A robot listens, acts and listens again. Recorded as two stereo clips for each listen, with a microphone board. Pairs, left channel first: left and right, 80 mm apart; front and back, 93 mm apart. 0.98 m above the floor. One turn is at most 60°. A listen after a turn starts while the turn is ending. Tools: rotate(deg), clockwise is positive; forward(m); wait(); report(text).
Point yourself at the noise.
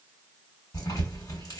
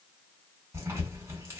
rotate(-60)
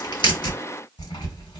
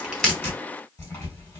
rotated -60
rotate(-60)
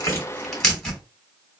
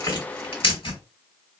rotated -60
report("Facing the tearing paper, 1 to 2 m away.")